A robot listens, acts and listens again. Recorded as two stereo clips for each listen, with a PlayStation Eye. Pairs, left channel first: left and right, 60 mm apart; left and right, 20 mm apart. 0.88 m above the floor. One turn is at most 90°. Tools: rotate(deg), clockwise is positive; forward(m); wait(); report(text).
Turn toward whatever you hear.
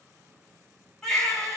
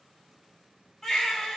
rotate(-30)
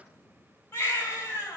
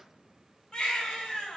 rotate(-90)
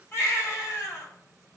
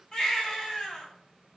rotate(-40)
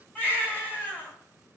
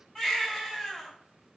rotate(-25)
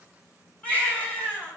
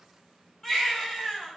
rotate(-20)
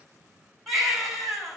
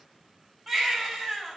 report("Found it: a baby crying, straight ahead, 2 to 4 m away.")